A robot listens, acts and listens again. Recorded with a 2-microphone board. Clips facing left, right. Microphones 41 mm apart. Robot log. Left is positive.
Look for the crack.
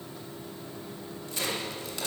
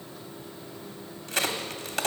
cmd yaw -90
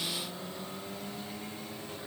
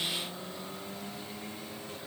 end: Facing where the crack came from. I can't hear it now.